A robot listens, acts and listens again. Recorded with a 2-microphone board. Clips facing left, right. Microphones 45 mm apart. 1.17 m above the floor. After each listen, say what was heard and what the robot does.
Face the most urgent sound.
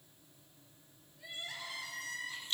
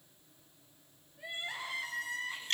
The crying: about 30° right or 150° right. Turn 30° right.
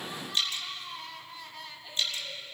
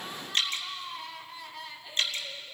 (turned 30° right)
Facing the crying.